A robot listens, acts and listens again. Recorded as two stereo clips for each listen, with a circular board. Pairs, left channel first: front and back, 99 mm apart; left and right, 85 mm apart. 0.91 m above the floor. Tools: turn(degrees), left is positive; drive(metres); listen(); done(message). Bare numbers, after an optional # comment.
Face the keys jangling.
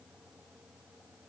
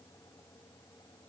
listen()
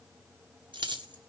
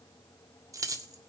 # The keys jangling: 135° right.
turn(-135)
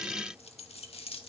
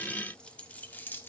# The keys jangling is now 20° left.
turn(20)
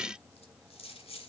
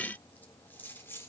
# The keys jangling is now 25° left.
turn(25)
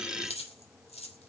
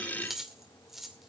done("Facing the keys jangling, 2 to 4 m away.")